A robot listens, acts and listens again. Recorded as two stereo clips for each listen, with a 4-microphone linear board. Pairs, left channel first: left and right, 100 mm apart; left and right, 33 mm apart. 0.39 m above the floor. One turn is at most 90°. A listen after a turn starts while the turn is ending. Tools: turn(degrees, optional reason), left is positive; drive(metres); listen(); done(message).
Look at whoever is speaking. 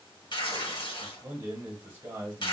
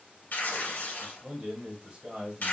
turn(degrees=-25, reason="The man speaking: about 25° right or 155° right.")
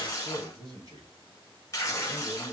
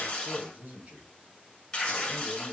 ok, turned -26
turn(degrees=-90, reason="So it is at 125° right.")
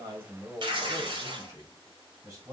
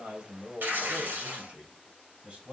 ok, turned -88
turn(degrees=-40, reason="The man speaking is now 40° right.")
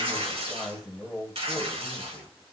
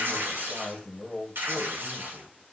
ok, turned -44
done("Facing the man speaking.")